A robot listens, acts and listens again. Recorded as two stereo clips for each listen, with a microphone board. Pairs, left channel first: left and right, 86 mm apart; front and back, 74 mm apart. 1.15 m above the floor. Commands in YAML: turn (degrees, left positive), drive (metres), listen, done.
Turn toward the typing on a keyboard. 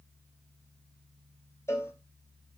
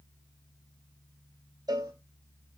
listen: true
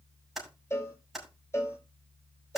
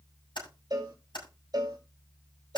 done: "Found it: typing on a keyboard, straight ahead."